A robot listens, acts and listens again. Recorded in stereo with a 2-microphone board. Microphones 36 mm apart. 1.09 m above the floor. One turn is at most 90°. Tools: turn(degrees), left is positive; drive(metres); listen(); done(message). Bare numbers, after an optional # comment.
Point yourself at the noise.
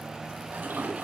turn(-90)
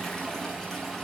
# So it is at 10° left.
turn(10)
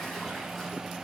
listen()
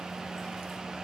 listen()
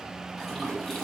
done("Found it: a toilet flushing, straight ahead.")